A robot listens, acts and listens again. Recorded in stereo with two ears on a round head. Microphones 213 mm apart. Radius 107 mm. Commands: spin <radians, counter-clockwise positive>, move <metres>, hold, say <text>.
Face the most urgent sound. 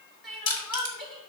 spin 0.52
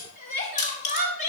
spin 2.62
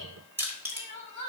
spin 0.52
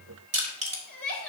say Facing the crying.